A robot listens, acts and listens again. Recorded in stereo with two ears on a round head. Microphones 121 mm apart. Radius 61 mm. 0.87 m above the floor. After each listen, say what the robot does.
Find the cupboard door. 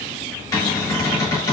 Turn 25° left.
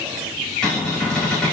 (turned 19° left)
Found it: a cupboard door, straight ahead.